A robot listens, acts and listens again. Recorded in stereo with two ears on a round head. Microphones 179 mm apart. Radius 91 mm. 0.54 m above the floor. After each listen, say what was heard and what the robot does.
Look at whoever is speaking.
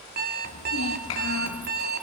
The child speaking: about 70° left or 110° left. Turn 70° left.
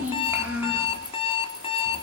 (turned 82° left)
So it is at 10° right. Turn 10° right.
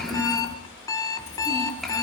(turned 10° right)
Facing the child speaking.